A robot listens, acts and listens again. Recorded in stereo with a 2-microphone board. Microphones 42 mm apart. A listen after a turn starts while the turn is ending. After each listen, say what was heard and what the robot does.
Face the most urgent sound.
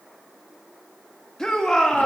Turn 30° left.
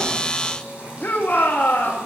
So it is at 135° left. Turn 135° left.
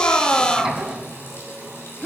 The shout is now 35° left. Turn 35° left.
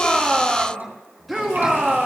Found it: a shout, straight ahead, 2 to 4 m away.